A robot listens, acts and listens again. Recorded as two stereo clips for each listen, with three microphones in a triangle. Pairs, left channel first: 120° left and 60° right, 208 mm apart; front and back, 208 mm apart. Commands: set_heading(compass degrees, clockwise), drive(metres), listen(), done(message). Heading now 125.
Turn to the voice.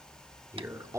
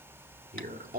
set_heading(260)
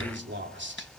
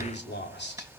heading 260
set_heading(295)
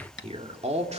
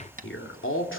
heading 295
done("Found it: a man speaking, straight ahead.")